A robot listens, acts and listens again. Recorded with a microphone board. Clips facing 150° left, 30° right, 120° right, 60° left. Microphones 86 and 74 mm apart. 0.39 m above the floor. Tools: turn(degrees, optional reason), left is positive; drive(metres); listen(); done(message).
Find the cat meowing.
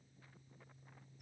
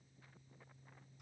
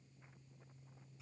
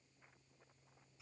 listen()
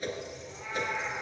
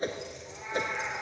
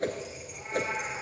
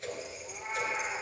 turn(degrees=35, reason="The cat meowing: 35° left.")
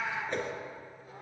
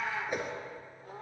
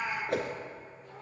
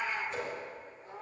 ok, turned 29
done("Found it: a cat meowing, straight ahead, 2 to 4 m away.")